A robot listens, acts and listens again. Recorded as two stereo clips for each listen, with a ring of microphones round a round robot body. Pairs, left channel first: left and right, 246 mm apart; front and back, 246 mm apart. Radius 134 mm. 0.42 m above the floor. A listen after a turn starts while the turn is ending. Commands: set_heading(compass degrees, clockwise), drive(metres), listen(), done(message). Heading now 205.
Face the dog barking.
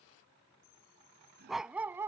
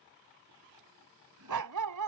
set_heading(15)
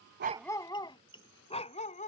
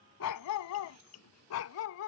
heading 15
set_heading(345)
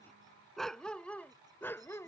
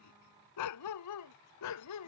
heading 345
set_heading(335)
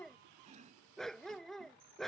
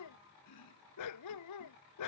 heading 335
done("Facing the dog barking.")